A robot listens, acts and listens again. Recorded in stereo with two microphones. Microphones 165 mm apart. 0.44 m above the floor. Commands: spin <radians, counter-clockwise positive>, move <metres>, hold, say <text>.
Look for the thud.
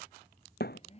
spin 1.57
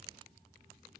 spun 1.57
say Facing where the thud came from. I can't hear it now.